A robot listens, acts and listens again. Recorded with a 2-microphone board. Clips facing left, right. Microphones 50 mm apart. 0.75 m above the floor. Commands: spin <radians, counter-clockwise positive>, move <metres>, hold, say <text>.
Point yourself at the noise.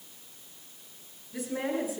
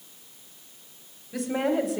spin -1.57
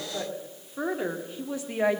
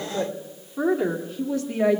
spin 0.35
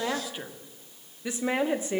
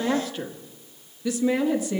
spin 0.44
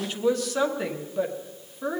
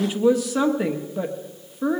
say Found it: a woman speaking, straight ahead.